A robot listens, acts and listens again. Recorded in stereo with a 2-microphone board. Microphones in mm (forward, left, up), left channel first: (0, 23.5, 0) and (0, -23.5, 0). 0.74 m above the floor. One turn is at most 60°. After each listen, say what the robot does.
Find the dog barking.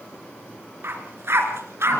Turn 60° right.
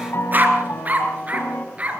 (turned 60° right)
Turn 30° right.
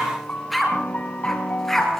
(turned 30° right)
Turn 10° left.
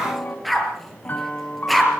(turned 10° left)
Found it: a dog barking, straight ahead, over 4 m away.